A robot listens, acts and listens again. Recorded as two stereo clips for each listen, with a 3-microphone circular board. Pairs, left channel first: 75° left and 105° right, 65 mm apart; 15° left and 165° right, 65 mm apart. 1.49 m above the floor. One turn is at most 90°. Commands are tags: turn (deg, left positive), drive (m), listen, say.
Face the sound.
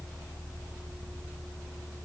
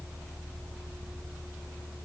<listen/>
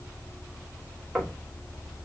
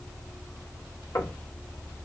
<turn deg="-20"/>
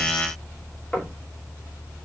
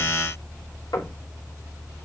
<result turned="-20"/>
<say>Found it: knocking, straight ahead, 2 to 4 m away.</say>